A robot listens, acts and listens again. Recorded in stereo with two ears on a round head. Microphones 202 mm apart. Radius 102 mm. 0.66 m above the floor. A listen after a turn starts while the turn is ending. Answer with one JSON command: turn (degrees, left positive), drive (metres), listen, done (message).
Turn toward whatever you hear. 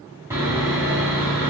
{"turn": -30}
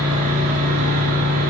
{"turn": -140}
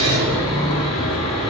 {"turn": 25}
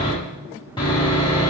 {"turn": 20}
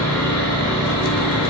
{"done": "Found it: sawing, straight ahead, 1 to 2 m away."}